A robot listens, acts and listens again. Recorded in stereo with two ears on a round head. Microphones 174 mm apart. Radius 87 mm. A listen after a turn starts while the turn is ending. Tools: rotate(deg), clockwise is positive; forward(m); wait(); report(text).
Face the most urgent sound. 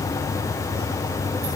wait()
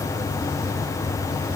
wait()
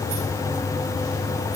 report("I can't make out anything urgent to turn to.")